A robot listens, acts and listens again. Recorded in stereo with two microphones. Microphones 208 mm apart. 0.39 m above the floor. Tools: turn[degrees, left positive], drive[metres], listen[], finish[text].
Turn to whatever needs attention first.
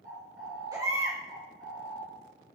Thought: The baby crying: about 15° right or 165° right.
Action: turn[-15]
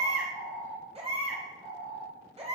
Thought: So it is at 150° right.
Action: turn[-150]
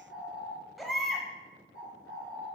Action: finish[Found it: a baby crying, straight ahead.]